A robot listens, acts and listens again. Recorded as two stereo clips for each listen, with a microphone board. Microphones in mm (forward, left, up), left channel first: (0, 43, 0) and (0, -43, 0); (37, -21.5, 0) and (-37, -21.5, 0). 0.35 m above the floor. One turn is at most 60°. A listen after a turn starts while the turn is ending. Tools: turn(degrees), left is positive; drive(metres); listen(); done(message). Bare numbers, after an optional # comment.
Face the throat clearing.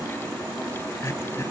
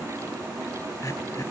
# The throat clearing: 35° left.
turn(35)
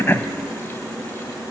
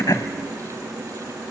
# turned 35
listen()
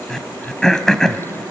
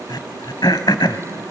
done("Facing the throat clearing, 1 to 2 m away.")